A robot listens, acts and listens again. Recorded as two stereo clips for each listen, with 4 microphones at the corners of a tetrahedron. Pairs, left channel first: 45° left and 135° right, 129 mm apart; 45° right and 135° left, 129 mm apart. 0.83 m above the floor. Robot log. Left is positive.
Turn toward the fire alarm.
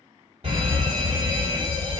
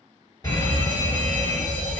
note: The fire alarm: 100° right.
cmd yaw -100
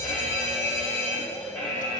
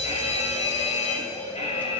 note: The fire alarm is now 30° right.
cmd yaw -30
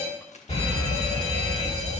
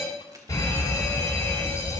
note: The fire alarm is now 15° left.
cmd yaw +15
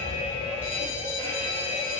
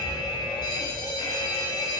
end: Found it: a fire alarm, straight ahead, 2 to 4 m away.